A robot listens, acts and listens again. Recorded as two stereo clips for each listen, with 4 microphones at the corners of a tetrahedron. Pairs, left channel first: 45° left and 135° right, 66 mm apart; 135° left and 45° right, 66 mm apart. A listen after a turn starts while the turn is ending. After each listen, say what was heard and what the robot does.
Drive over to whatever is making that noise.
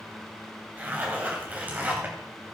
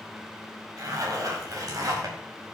The zipper: 70° right. Turn 70° right.
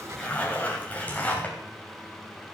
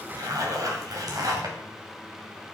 The zipper is now 25° right. Turn 25° right.
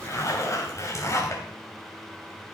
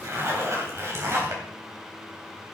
Drive 1.0 m forward.
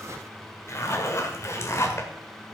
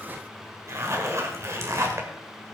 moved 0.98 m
Drive 1.0 m forward.
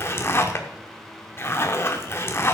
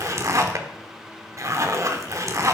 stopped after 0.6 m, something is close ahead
Arrived at the zipper, straight ahead.